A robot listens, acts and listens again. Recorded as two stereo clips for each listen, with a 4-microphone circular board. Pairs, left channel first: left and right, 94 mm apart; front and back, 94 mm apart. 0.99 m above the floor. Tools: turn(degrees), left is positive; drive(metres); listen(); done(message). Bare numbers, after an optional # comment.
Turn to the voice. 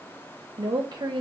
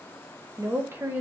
# The woman speaking: 120° right.
turn(-120)
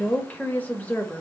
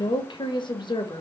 # The woman speaking is now 20° left.
turn(20)
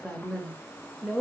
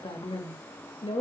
done("Facing the woman speaking.")